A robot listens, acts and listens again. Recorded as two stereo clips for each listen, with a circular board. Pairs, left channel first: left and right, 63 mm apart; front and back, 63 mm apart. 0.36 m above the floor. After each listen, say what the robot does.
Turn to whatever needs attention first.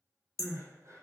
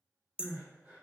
Turn 130° right.
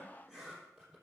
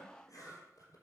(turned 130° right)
Keep listening.
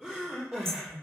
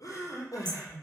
Turn 10° right.
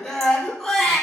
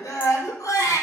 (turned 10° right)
Found it: crying, straight ahead, 2 to 4 m away.